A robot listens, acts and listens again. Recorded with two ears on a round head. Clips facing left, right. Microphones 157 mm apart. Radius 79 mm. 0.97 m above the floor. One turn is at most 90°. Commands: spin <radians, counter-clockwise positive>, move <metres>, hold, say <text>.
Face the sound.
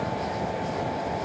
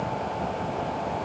hold
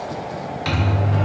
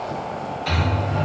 spin 1.57
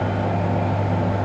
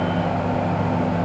spin 0.26
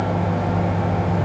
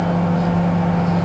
say Found it: a microwave, straight ahead.